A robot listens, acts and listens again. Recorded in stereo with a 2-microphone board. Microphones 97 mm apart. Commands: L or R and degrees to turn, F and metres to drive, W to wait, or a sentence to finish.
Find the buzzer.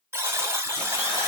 R25
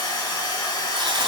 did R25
W
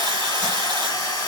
W
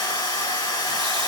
I heard a buzzer, but can't make it out now. It was about straight ahead or 130° right.